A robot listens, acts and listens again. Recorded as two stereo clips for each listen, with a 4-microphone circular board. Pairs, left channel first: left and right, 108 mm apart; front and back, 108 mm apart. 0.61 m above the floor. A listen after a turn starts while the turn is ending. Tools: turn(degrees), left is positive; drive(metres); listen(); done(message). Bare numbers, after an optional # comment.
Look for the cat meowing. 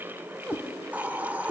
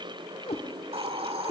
# The cat meowing: 10° right.
turn(-10)
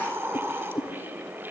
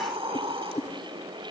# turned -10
done("Facing the cat meowing.")